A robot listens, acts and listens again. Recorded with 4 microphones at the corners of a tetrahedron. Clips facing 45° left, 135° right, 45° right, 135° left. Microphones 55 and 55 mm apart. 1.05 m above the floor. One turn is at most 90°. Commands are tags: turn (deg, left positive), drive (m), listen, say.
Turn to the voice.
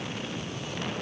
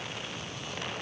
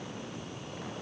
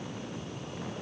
<listen/>
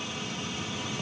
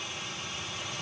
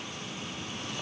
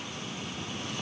<listen/>
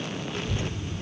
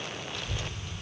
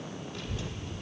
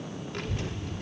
<turn deg="90"/>
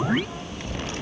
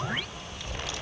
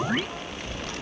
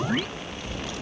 <say>Found it: a child speaking, straight ahead, 1 to 2 m away.</say>